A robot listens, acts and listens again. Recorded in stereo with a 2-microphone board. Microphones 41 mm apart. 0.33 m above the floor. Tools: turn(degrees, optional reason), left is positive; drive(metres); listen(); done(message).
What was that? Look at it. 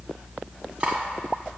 turn(degrees=-25, reason="The cutlery clinking: about 25° right or 155° right.")
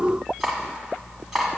done("Facing the cutlery clinking.")